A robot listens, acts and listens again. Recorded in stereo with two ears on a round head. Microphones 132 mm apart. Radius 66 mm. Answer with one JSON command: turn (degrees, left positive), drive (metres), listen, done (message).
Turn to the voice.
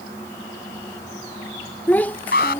{"turn": 30}
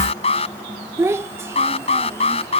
{"turn": -15}
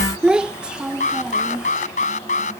{"done": "Facing the child speaking."}